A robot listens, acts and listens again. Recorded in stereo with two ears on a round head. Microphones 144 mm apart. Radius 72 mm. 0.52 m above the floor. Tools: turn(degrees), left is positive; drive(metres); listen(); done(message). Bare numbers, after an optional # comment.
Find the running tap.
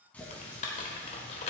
turn(30)
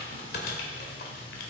listen()
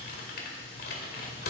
listen()
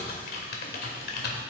done("I heard a running tap, but can't make it out now. It was about 20° right or 140° left.")